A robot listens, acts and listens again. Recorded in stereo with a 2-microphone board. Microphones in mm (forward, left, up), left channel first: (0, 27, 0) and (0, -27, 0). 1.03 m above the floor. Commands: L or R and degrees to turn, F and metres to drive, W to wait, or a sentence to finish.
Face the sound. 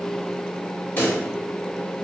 L40
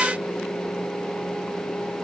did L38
W
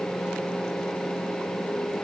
I heard a pop, but can't make it out now. It was about straight ahead or 105° left.